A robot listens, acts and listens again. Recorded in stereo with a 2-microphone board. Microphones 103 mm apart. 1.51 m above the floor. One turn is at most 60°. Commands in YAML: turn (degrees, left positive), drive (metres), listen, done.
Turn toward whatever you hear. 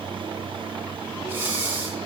turn: -20
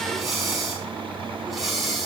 done: "Found it: breathing, straight ahead, 2 to 4 m away."